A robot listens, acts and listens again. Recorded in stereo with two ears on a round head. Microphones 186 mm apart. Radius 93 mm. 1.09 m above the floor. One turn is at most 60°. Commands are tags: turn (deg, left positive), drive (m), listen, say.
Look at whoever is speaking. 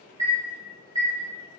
<listen/>
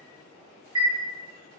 <listen/>
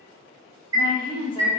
<turn deg="25"/>
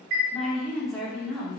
<say>Facing the woman speaking.</say>